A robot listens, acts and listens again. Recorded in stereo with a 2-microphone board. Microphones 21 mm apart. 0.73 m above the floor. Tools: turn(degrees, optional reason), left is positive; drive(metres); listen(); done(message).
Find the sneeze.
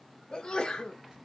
turn(degrees=50, reason="The sneeze: about 50° left or 130° left.")
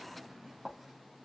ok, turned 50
listen()
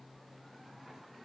done("I heard a sneeze, but can't make it out now. It was about straight ahead or 80° left.")